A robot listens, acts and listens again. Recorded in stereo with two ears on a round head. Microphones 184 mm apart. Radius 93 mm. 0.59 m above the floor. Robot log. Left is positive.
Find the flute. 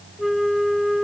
cmd yaw +30
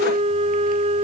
note: So it is at 30° right.
cmd yaw -30
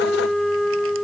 end: Facing the flute.